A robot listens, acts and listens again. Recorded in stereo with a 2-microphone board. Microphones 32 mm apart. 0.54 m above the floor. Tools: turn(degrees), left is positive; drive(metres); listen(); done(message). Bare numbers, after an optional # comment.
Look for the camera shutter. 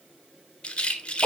listen()
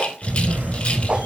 # The camera shutter: about 75° right or 105° right.
turn(-75)
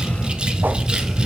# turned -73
done("Facing the camera shutter.")